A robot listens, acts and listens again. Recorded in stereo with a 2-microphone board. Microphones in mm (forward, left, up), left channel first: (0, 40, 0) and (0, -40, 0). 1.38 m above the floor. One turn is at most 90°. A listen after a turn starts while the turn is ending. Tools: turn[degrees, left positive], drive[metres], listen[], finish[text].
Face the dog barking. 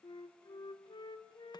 Action: listen[]
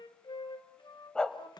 Action: turn[30]
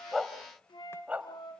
Thought: So it is at 15° right.
Action: turn[-15]
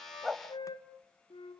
Action: finish[Found it: a dog barking, straight ahead, 2 to 4 m away.]